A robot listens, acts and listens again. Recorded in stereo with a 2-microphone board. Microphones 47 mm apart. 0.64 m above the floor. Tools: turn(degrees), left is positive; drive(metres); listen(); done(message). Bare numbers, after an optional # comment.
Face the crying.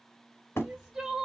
turn(-30)
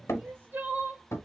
# So it is at 140° right.
turn(-140)
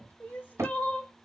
# The crying is now 35° left.
turn(35)
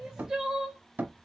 # The crying is now 15° right.
turn(-15)
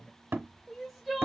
done("Found it: crying, straight ahead, 2 to 4 m away.")